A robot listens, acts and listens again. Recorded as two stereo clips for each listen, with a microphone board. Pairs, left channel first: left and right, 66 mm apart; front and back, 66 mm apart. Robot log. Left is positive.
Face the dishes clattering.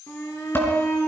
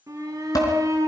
note: The dishes clattering: 30° left.
cmd yaw +30
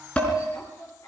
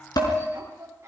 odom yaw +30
note: The dishes clattering is now 15° left.
cmd yaw +15
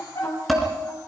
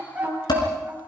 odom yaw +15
end: Found it: dishes clattering, straight ahead, over 4 m away.